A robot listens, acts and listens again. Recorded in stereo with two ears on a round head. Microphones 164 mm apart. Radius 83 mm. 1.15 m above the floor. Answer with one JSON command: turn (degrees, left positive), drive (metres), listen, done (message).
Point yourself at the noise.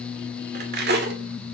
{"turn": -65}
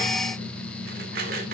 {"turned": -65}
{"turn": -50}
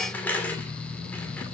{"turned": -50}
{"turn": 10}
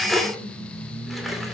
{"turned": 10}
{"done": "Facing the cutlery clinking, 2 to 4 m away."}